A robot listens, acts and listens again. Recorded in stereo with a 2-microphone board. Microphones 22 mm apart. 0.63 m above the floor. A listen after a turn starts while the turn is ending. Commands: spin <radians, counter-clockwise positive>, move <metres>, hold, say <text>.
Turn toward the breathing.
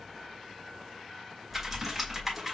hold
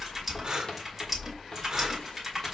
spin -0.52
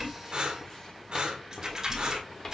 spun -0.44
spin -2.09
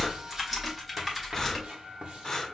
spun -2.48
spin 0.35
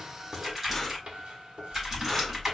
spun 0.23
spin 0.17
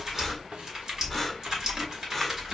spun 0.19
hold
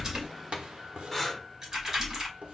say Found it: breathing, straight ahead, 1 to 2 m away.